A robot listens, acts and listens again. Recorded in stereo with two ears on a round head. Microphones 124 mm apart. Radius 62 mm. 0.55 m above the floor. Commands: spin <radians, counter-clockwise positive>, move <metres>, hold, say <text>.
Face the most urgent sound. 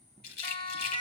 spin 0.61
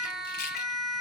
say Facing the siren, 2 to 4 m away.